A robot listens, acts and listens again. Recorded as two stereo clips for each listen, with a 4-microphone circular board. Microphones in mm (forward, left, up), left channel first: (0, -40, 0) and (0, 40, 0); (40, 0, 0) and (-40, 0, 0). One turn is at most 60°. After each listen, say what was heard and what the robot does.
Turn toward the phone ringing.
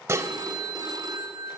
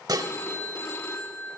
The phone ringing: 55° left. Turn 55° left.
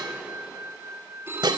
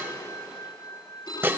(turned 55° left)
The phone ringing is now 25° left. Turn 25° left.
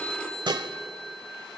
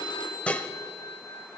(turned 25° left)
The phone ringing is now 15° right. Turn 15° right.
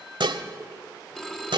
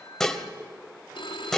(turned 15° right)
Facing the phone ringing.